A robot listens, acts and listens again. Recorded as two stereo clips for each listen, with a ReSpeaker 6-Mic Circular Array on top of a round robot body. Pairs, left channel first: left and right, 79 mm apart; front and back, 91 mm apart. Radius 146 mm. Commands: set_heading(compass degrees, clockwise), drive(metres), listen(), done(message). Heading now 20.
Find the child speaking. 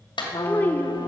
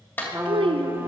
set_heading(220)
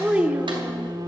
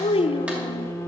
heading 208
set_heading(223)
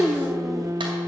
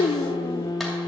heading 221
done("Facing the child speaking.")